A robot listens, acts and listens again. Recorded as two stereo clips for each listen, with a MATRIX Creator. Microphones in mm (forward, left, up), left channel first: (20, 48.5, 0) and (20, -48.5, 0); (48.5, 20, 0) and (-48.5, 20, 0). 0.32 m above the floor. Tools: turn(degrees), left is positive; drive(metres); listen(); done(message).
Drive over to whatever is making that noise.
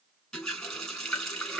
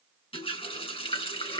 drive(metres=1.0)
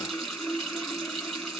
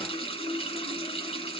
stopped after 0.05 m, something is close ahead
done("Blocked. The running tap is further on, straight ahead.")